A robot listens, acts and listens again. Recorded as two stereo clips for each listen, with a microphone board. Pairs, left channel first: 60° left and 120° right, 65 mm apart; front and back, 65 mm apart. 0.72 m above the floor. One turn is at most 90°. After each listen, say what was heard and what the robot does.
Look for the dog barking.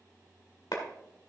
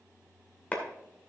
Keep listening.
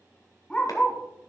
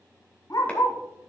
The dog barking: 10° right. Turn 10° right.
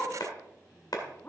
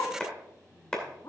Found it: a dog barking, straight ahead, 1 to 2 m away.